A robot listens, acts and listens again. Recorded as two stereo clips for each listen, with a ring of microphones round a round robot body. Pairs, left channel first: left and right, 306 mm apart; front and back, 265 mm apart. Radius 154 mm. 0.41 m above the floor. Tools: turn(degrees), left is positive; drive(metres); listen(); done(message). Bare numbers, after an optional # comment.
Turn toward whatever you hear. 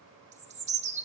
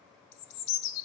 # The bird: 20° right.
turn(-20)
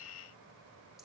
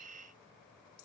listen()
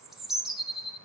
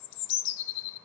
done("Found it: a bird, straight ahead.")